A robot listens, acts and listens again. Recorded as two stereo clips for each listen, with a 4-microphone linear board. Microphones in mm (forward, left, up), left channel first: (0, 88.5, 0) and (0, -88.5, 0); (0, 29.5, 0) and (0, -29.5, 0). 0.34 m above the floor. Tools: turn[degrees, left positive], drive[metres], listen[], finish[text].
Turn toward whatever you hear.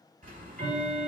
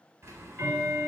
Thought: The ticking: about 50° right or 130° right.
Action: turn[-50]
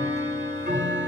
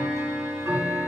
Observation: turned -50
Thought: So it is at 80° right.
Action: turn[-80]
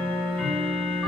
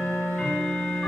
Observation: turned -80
Thought: The ticking is now 10° left.
Action: turn[10]
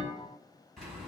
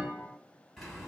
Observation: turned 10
Action: finish[Found it: ticking, straight ahead.]